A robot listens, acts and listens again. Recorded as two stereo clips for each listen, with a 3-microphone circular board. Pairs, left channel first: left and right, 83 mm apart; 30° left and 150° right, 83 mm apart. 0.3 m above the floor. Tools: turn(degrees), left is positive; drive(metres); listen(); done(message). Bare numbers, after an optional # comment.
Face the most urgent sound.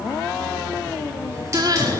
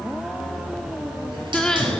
# The crying: 50° right.
turn(-50)
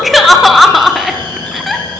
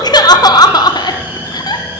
done("Facing the crying.")